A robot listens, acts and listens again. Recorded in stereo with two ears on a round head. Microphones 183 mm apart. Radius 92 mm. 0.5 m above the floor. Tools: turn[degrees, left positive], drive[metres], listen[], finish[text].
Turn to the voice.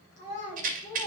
Thought: The child speaking: about 35° left or 145° left.
Action: turn[35]
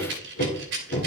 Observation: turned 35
Action: listen[]
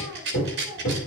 Action: listen[]
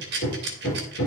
Action: finish[I heard a child speaking, but can't make it out now. It was about straight ahead or 110° left.]